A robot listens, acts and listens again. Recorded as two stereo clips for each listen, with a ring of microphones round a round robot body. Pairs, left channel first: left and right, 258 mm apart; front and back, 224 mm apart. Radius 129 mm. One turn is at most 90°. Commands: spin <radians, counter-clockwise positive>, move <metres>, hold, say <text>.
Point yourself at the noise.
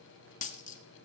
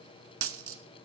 spin 1.57
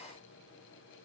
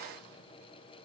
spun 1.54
spin 1.13
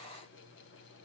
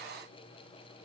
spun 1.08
say I heard a dropped coin from this way, but can't make it out now.